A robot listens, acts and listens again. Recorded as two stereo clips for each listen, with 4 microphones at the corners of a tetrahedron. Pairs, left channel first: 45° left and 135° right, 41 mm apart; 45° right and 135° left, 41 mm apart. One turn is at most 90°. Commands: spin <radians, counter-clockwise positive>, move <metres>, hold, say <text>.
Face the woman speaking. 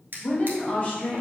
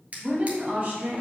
spin 1.57
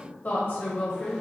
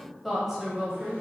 spin 1.13
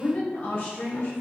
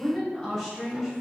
spin 0.61
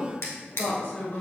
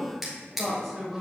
spin 0.70
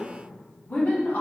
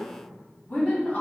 say Facing the woman speaking, 1 to 2 m away.